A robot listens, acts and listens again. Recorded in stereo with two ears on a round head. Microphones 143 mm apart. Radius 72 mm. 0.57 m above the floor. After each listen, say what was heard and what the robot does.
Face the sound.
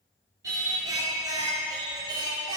The singing: about 30° right or 150° right. Turn 30° right.
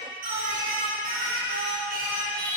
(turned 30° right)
So it is at 110° right. Turn 110° right.
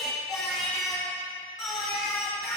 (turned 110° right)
Found it: singing, straight ahead, over 4 m away.